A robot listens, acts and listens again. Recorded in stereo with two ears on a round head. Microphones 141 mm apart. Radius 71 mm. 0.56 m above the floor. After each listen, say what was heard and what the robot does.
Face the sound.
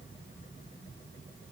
Keep listening.
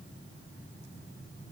Keep listening.
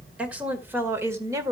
The woman speaking: about 20° right or 160° right. Turn 20° right.
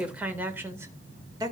The woman speaking: about 25° right or 155° right. Turn 25° right.
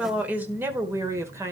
The woman speaking: about 20° right or 160° right. Turn 20° right.
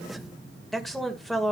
Facing the woman speaking, 1 to 2 m away.